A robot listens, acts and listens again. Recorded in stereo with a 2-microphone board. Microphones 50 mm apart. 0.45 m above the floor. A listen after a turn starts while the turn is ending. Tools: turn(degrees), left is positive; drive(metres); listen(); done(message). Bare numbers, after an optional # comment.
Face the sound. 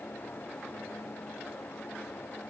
listen()
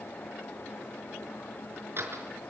# The door slam: about 50° right or 130° right.
turn(-50)
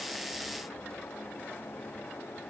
listen()
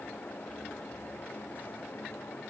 done("I heard a door slam, but can't make it out now. It was about straight ahead or 80° right.")